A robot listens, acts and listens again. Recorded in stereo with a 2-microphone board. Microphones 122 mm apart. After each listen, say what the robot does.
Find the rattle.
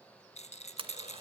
Turn 65° left.
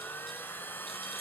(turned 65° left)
Keep listening.
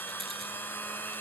Keep listening.
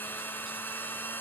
I heard a rattle, but can't make it out now. It was about straight ahead or 50° left.